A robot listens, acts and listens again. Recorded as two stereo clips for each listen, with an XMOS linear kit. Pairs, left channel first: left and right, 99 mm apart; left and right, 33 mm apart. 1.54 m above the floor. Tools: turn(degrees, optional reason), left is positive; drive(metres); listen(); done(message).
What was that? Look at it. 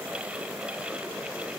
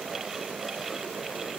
listen()
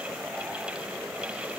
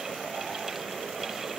listen()
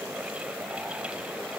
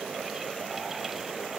done("I can't make out anything.")